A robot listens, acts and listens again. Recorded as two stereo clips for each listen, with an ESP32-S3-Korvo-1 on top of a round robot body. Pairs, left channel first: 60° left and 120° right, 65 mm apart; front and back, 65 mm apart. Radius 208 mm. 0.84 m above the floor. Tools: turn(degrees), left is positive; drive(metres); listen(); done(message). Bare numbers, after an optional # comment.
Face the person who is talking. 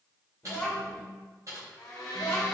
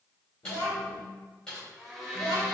# The child speaking: 10° right.
turn(-10)
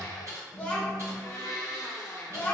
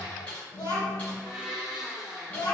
done("Facing the child speaking.")